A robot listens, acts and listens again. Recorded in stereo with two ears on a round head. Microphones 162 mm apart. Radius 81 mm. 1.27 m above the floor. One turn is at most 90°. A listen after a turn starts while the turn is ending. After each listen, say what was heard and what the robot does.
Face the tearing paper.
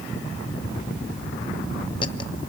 Keep listening.
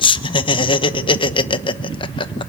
Keep listening.
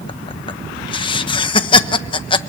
I can't make out tearing paper to turn to.